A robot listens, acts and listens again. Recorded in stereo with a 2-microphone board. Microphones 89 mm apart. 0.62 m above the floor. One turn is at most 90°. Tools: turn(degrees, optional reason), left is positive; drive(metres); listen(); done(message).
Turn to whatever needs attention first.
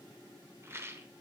listen()
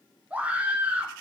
turn(degrees=-15, reason="The scream: about 15° right or 165° right.")
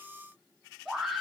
done("Facing the scream.")